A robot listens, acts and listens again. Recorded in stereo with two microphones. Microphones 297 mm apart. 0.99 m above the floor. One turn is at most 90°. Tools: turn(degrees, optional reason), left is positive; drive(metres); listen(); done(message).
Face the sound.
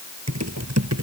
turn(degrees=-60, reason="The typing on a keyboard: about 60° right or 120° right.")
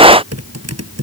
turn(degrees=-55, reason="So it is at 55° right.")
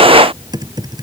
turn(degrees=-15, reason="The typing on a keyboard is now 15° right.")
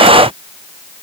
listen()
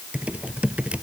done("Found it: typing on a keyboard, straight ahead.")